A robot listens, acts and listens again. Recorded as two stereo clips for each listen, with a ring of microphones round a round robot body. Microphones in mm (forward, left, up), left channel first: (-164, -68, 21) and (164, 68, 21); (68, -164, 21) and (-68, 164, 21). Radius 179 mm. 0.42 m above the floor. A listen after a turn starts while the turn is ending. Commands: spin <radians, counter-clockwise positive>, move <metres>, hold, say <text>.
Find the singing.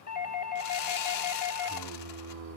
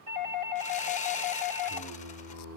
spin 1.22
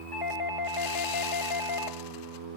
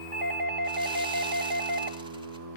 spin 1.22
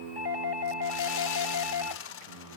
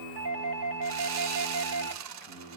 spin 0.87
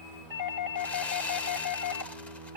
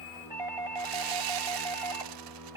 spin 0.35
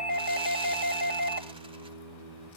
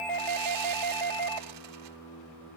say Found it: singing, straight ahead, 2 to 4 m away.